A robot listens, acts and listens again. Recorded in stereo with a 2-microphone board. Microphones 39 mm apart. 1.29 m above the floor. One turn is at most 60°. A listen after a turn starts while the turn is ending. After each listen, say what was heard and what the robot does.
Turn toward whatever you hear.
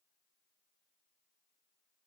Keep listening.
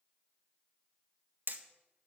The hammering: about 55° right or 125° right. Turn 55° right.
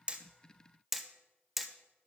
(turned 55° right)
Facing the hammering.